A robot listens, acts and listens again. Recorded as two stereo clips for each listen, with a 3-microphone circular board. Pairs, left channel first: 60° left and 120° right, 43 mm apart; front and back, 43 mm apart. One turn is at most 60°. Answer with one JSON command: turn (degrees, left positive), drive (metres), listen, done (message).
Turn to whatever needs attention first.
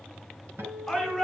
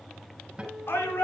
{"turn": -15}
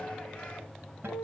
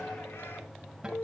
{"listen": true}
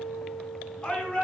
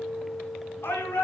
{"done": "Facing the shout."}